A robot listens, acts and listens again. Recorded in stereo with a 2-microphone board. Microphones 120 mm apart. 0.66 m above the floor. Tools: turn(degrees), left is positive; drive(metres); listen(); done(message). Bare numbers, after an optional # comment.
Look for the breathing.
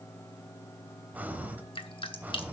turn(-30)
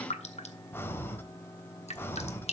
# So it is at 20° left.
turn(20)
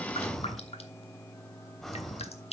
done("Facing the breathing.")